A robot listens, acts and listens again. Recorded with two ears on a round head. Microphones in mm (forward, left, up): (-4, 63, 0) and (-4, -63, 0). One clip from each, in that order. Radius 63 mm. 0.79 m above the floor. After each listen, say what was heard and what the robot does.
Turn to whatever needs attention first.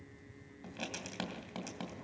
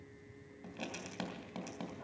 Keep listening.
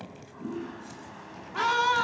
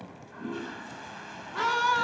Turn 30° left.
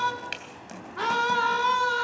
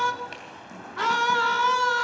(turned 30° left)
So it is at 20° right. Turn 20° right.
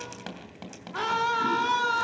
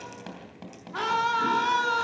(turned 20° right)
Found it: a scream, straight ahead, 2 to 4 m away.